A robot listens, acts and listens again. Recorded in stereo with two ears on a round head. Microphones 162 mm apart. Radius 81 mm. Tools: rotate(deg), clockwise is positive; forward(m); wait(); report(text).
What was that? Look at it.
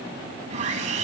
rotate(40)
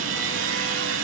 rotate(100)
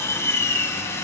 rotate(-15)
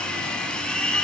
report("Found it: sawing, straight ahead, 1 to 2 m away.")